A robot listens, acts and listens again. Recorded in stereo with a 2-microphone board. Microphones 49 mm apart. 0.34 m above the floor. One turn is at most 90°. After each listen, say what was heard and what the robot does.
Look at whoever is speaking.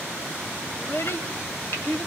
The child speaking: about 60° left or 120° left. Turn 60° left.
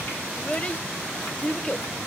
So it is at 30° left. Turn 30° left.
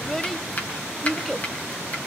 Facing the child speaking, under 1 m away.